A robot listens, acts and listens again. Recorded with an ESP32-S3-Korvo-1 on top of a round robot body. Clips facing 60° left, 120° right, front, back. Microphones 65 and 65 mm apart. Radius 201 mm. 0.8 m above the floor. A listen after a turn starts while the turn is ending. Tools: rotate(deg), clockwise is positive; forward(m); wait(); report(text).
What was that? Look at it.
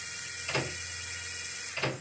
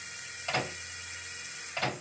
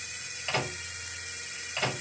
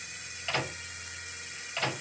rotate(80)
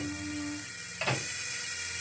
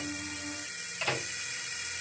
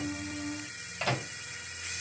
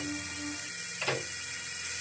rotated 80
report("Found it: a microwave, straight ahead, 1 to 2 m away.")